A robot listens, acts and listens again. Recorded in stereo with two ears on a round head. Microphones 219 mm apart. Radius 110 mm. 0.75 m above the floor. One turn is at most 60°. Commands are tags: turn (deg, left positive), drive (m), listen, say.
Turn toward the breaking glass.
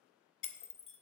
<turn deg="55"/>
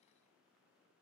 <listen/>
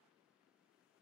<say>I heard breaking glass, but can't make it out now. It was about straight ahead or 70° left.</say>